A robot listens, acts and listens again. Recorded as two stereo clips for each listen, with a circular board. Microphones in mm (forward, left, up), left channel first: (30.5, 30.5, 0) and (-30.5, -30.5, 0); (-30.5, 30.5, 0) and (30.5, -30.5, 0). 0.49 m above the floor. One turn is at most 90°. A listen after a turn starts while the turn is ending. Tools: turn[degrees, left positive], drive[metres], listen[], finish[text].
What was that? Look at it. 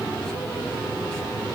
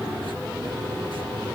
Action: listen[]
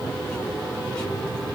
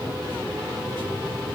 Action: listen[]
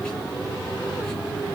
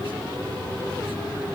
Action: finish[I can't make out anything to turn to.]